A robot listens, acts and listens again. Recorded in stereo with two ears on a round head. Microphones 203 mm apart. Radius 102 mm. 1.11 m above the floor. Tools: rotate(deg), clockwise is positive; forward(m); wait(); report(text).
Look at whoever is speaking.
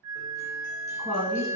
rotate(20)
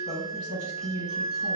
rotate(140)
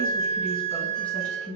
report("Found it: a woman speaking, straight ahead, 1 to 2 m away.")